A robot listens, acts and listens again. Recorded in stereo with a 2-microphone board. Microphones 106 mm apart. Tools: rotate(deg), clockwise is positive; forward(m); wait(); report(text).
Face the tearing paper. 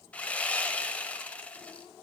wait()
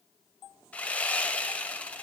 wait()
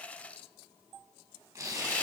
rotate(25)
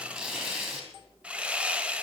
report("Found it: tearing paper, straight ahead.")